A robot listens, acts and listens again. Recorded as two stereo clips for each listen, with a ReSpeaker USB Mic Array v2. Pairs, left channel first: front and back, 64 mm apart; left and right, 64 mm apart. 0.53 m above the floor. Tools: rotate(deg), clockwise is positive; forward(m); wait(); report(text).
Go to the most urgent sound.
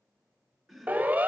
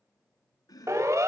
rotate(115)
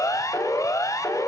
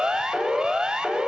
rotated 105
rotate(10)
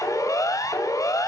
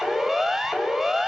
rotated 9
forward(1.0)
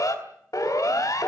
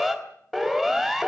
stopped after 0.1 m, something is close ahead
report("Something is in my way. I am facing the siren but have not reached it.")